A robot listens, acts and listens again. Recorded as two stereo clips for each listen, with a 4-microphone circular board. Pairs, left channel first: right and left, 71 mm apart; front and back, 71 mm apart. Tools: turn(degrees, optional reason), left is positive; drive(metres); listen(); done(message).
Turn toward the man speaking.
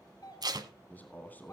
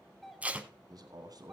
turn(degrees=-155, reason="The man speaking: 155° right.")
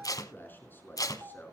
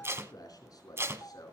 turn(degrees=-30, reason="The man speaking is now 30° right.")
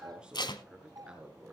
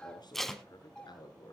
turn(degrees=15, reason="The man speaking is now 15° left.")
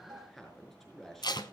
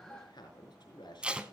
done("Facing the man speaking.")